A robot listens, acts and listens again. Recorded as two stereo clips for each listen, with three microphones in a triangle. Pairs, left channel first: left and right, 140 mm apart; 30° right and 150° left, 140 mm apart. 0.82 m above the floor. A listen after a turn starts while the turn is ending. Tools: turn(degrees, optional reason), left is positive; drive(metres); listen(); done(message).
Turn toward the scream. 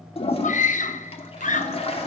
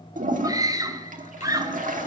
turn(degrees=90, reason="The scream: 90° left.")
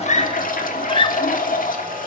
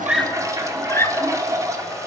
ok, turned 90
turn(degrees=40, reason="The scream is now 40° left.")
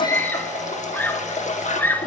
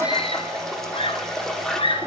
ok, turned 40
turn(degrees=15, reason="The scream is now 15° left.")
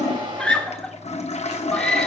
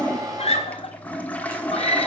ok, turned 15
done("Found it: a scream, straight ahead.")